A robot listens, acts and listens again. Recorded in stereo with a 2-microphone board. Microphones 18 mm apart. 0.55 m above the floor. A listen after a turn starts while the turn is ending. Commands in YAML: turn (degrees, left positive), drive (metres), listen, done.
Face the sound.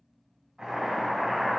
turn: -45
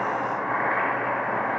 done: "Facing the boiling."